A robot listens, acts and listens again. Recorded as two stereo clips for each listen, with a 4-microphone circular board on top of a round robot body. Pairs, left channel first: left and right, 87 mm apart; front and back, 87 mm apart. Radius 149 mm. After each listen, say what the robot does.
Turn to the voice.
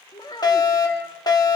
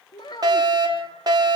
Turn 45° left.
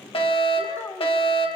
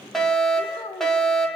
Turn 20° left.
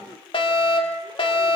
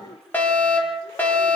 Turn 15° left.
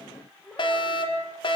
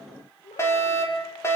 Turn 10° left.
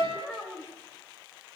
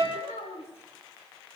Found it: a child speaking, straight ahead, over 4 m away.